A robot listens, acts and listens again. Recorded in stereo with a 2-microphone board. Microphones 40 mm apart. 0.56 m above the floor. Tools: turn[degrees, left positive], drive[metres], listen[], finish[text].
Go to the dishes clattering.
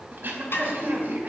Thought: The dishes clattering: about 70° left or 110° left.
Action: turn[70]
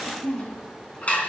Thought: So it is at 35° left.
Action: turn[35]
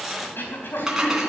Thought: The dishes clattering is now 15° right.
Action: turn[-15]
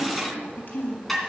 Action: drive[1.0]
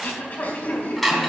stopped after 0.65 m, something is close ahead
Action: finish[Blocked. The dishes clattering is further on, straight ahead.]